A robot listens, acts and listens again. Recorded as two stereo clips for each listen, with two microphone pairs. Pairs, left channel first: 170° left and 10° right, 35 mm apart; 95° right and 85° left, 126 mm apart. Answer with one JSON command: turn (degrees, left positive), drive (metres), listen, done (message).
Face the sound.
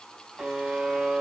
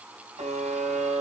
{"turn": 75}
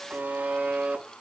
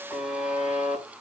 {"done": "Found it: a buzzer, straight ahead."}